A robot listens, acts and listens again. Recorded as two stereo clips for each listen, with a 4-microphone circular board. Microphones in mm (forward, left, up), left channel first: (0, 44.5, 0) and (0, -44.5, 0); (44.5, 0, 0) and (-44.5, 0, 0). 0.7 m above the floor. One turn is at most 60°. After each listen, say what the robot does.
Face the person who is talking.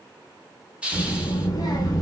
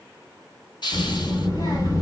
Turn 40° left.
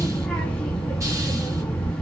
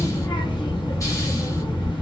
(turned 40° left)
Turn 10° left.
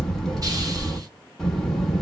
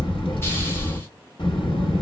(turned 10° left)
Found it: a child speaking, straight ahead, under 1 m away.